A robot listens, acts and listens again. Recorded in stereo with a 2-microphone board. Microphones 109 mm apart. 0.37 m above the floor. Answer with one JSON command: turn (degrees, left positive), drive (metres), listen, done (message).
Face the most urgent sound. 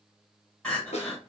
{"turn": 30}
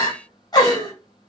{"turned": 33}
{"turn": 140}
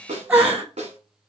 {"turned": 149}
{"turn": -10}
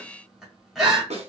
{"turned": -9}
{"done": "Found it: crying, straight ahead, 1 to 2 m away."}